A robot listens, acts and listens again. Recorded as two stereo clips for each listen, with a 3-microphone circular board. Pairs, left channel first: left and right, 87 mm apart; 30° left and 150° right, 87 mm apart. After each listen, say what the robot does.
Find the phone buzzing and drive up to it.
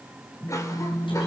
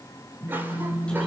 Turn 35° left.
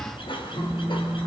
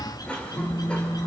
Drive 1.0 m forward.
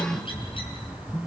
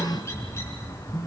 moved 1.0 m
Turn 10° left.
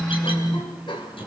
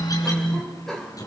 Drive 1.0 m forward.
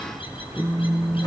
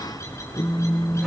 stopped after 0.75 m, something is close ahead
I am next to the phone buzzing.